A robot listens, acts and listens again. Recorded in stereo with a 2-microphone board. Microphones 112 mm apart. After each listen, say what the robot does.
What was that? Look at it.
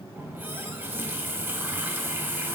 Turn 20° right.
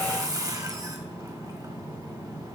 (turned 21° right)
Turn 135° right.
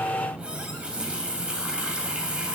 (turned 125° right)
Turn 10° right.
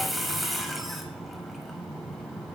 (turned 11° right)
Facing the running tap.